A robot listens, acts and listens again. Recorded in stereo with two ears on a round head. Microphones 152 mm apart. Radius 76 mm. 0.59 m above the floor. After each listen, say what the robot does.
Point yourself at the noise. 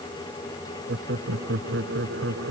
Turn 90° right.
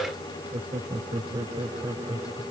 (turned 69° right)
Turn 20° right.
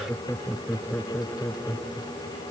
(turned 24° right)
Found it: laughter, straight ahead.